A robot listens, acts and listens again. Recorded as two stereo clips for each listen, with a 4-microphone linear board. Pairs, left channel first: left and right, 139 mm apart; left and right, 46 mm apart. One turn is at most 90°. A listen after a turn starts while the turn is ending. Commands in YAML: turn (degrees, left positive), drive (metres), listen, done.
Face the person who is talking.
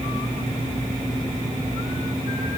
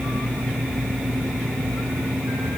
listen: true
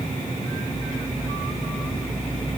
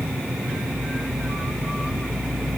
listen: true
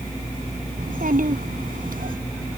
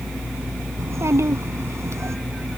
turn: -90
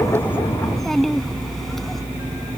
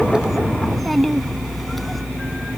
done: "Facing the child speaking."